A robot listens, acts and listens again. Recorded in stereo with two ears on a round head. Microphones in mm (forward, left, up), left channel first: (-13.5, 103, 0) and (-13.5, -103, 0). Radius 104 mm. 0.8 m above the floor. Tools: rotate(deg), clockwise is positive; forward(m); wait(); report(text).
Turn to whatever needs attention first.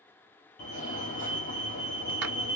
rotate(-35)
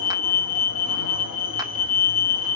rotate(-105)
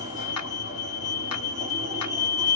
rotate(20)
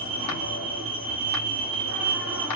report("Facing the fire alarm.")